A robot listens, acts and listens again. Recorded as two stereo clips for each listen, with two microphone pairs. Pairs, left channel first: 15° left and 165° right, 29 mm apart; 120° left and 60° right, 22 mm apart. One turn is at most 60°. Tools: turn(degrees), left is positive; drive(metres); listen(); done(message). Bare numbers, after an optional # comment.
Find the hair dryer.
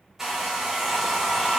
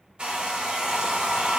# The hair dryer: 85° right.
turn(-60)
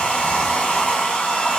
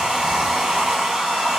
# The hair dryer is now 15° right.
turn(-15)
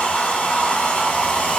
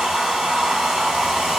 done("Facing the hair dryer.")